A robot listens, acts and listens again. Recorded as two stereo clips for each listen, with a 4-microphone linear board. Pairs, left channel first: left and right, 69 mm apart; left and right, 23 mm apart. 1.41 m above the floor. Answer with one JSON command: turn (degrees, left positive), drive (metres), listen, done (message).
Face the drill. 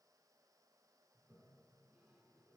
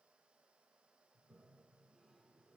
{"listen": true}
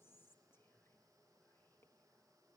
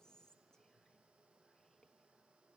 {"listen": true}
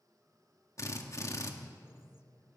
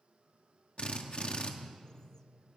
{"turn": 50}
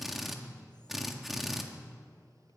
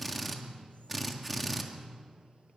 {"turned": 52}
{"done": "Facing the drill, 1 to 2 m away."}